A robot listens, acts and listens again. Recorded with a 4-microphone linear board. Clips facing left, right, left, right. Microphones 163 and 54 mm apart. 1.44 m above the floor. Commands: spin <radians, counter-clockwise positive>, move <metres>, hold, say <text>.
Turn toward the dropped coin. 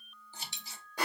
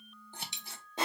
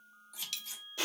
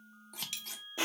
spin -0.35
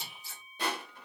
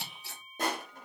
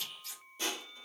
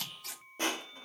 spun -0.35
hold
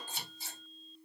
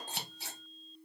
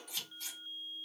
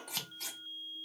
say I heard a dropped coin, but can't make it out now. It was about straight ahead or 140° right.